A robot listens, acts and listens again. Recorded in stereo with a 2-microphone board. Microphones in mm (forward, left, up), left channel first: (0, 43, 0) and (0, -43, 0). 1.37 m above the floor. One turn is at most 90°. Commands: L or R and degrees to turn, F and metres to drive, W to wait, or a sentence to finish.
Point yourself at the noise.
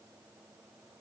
W
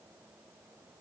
W
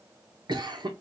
R55
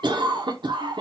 R65
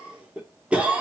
R15
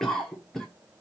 Facing the cough.